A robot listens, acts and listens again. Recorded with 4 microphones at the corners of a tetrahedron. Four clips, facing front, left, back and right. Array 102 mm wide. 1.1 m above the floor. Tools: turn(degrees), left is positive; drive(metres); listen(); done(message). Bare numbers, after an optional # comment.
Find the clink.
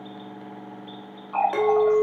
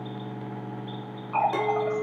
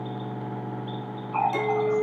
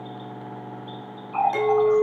# The clink: 20° left.
turn(20)
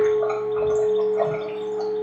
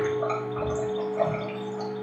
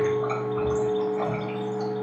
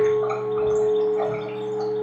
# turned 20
done("Facing the clink.")